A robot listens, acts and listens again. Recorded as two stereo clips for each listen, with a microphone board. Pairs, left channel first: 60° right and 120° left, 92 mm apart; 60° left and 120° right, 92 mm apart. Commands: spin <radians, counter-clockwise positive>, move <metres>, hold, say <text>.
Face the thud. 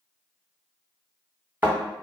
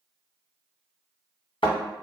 spin 0.87
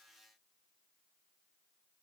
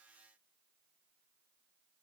say I heard a thud from this way, but can't make it out now.